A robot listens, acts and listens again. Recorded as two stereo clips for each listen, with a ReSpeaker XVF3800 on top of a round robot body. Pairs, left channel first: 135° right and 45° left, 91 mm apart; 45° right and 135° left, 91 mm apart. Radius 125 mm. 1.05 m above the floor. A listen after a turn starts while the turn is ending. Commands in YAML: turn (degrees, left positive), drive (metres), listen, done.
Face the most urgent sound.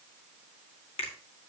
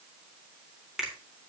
listen: true
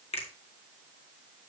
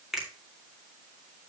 listen: true
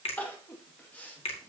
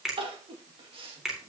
turn: 150
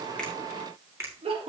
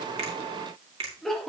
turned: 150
turn: 40
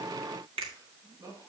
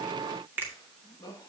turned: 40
done: "Found it: crying, straight ahead."